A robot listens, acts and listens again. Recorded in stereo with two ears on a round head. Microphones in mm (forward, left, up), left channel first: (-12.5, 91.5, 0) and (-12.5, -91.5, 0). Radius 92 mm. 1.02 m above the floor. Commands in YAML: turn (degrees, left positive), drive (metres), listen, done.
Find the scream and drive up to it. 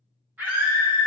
turn: -30
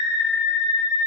turn: 20
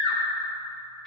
drive: 1.0
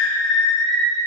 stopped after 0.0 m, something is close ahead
done: "Something is in my way. I am facing the scream but have not reached it."